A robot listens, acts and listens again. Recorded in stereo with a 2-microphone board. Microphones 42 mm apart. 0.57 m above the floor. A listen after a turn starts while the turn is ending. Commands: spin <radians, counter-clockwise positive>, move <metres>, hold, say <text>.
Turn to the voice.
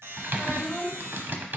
spin -0.52
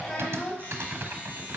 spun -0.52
spin 0.35
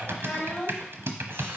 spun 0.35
say Facing the child speaking, 2 to 4 m away.